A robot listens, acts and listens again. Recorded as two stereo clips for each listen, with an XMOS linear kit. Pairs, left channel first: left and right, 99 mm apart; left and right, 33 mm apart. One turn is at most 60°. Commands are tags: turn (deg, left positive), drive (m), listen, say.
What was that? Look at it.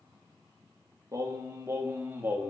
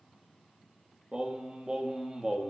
<turn deg="-20"/>
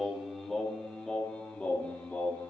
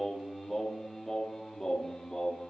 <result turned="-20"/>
<turn deg="15"/>
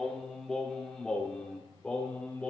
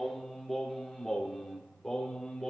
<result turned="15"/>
<turn deg="10"/>
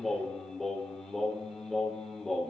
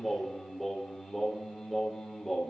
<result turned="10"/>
<say>Found it: singing, straight ahead.</say>